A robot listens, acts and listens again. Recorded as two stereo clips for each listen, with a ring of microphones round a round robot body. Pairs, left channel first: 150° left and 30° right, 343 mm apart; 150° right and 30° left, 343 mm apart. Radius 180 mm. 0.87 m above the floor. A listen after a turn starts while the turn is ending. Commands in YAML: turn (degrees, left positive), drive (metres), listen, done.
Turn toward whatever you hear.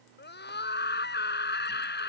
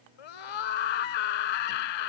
turn: -150
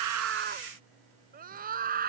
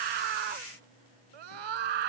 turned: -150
turn: 35
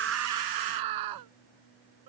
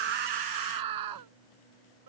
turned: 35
done: "Facing the scream."